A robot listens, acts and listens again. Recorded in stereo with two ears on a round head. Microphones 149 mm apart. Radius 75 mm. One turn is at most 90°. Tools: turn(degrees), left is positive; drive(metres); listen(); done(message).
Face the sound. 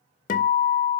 turn(degrees=50)
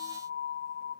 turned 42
turn(degrees=85)
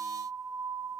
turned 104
turn(degrees=-20)
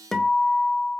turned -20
done("Found it: a guitar, straight ahead, 1 to 2 m away.")